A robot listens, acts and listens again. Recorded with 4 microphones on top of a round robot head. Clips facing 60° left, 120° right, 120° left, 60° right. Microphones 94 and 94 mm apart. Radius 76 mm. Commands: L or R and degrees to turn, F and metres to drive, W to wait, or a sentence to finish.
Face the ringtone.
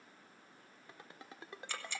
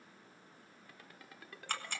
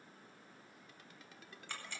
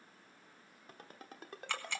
R10
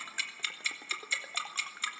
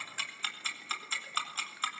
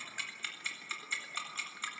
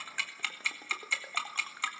W
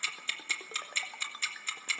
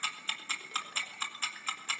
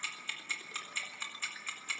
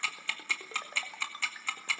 W
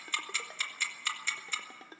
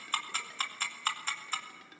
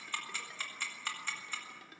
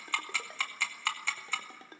Facing the ringtone, 1 to 2 m away.